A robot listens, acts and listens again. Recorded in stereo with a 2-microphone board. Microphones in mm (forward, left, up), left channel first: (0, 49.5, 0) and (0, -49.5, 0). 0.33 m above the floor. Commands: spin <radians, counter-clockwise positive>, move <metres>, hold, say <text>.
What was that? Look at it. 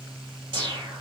spin -0.87
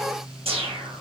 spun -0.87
spin -1.40
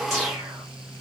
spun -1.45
hold
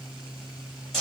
say Facing the whoosh.